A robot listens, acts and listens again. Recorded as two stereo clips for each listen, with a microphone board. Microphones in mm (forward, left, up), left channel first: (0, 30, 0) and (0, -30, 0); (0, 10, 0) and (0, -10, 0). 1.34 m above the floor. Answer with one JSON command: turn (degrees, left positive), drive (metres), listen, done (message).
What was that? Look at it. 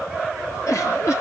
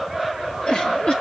{"turn": 60}
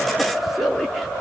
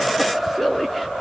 {"done": "Facing the giggle."}